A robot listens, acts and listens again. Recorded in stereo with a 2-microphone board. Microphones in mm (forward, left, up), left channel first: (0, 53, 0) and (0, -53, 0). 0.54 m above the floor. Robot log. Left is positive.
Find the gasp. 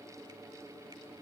cmd idle
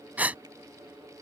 note: The gasp: about 15° right or 165° right.
cmd yaw -15
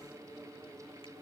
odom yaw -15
cmd idle
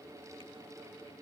end: I heard a gasp, but can't make it out now. It was about straight ahead or 150° right.